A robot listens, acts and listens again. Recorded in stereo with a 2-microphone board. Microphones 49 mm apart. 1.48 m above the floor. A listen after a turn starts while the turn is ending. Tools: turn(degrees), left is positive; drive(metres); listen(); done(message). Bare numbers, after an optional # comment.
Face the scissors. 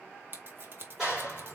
# The scissors: about 45° right or 135° right.
turn(-45)
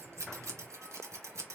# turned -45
# So it is at 85° right.
turn(-85)
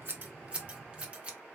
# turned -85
# The scissors is now 20° right.
turn(-20)
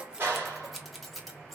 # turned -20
done("Facing the scissors, 1 to 2 m away.")